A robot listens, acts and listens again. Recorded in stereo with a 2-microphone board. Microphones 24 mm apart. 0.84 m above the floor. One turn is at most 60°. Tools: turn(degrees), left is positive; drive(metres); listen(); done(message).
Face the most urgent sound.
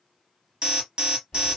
turn(degrees=-35)
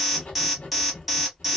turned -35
done("Facing the alarm, 1 to 2 m away.")